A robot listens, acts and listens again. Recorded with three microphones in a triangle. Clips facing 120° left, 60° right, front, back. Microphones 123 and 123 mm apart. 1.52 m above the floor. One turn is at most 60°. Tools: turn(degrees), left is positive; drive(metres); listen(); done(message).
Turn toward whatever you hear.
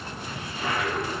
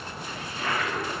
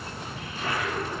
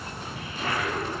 turn(degrees=-60)
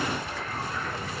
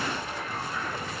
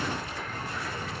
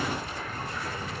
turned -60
turn(degrees=-60)
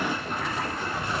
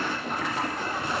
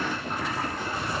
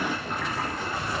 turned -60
turn(degrees=-60)
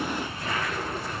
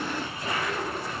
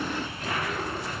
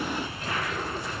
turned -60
turn(degrees=10)
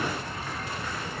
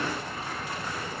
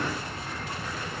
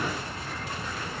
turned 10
listen()
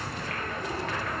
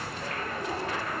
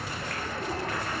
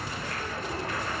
done("Facing the toilet flushing, over 4 m away.")